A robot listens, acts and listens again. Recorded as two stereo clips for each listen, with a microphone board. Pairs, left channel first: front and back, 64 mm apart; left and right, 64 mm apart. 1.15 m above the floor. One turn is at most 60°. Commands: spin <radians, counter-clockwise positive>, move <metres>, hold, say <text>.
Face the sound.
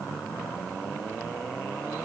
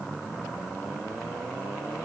hold
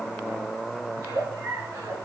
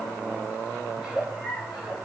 spin -1.05
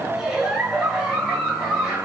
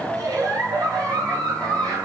spin -1.05
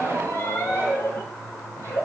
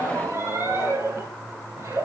spin -0.79
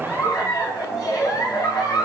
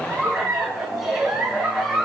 say Found it: a giggle, straight ahead, over 4 m away.